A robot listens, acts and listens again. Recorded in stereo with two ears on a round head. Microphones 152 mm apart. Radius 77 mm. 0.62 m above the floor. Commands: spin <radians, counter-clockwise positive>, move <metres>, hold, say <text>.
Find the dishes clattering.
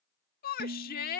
spin -1.22
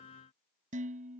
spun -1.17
spin -0.79
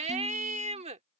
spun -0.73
hold
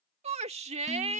hold
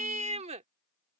say I heard dishes clattering from this way, but can't make it out now.